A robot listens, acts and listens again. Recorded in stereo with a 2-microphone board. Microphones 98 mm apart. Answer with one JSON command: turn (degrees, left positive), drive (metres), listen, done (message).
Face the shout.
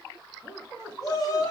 {"turn": 40}
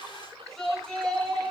{"done": "Facing the shout, 2 to 4 m away."}